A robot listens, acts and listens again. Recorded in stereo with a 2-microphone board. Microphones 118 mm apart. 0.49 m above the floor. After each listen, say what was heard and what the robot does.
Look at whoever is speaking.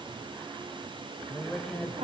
Turn 30° left.
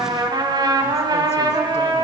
Keep listening.
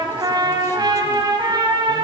Keep listening.
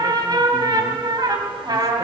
I heard a woman speaking, but can't make it out now. It was about 30° right or 150° left.